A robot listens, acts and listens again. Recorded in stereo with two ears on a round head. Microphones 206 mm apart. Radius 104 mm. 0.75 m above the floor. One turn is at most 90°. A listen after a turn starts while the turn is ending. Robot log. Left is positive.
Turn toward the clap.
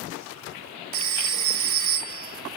cmd idle
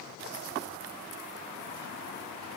cmd idle
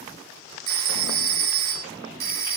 end: I can't make out a clap to turn to.